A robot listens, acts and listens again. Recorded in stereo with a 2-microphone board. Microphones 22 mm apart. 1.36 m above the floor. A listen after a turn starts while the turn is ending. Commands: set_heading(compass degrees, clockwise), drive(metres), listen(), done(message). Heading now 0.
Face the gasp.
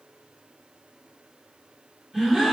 set_heading(30)
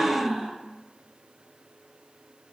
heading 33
set_heading(148)
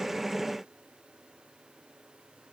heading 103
set_heading(148)
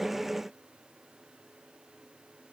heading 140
set_heading(150)
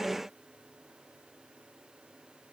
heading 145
done("Facing where the gasp came from. I can't hear it now.")